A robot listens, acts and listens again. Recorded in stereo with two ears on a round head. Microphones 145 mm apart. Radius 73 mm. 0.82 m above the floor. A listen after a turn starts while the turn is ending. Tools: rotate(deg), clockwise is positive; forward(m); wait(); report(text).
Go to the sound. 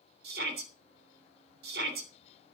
rotate(65)
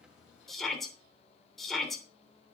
forward(1.0)
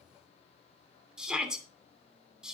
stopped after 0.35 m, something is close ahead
report("Something is in my way. I am facing the shout but have not reached it.")